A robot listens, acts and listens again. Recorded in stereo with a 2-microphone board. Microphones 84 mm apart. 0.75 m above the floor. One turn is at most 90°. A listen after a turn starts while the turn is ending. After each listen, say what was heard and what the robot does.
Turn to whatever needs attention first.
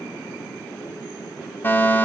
The fire alarm: about 25° left or 155° left. Turn 25° left.
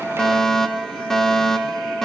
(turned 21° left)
Facing the fire alarm.